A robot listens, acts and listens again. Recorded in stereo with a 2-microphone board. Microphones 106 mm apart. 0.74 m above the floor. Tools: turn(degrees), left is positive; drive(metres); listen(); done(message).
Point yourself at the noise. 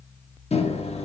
turn(degrees=65)
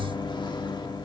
turn(degrees=45)
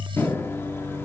turn(degrees=20)
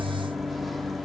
done("Facing the microwave.")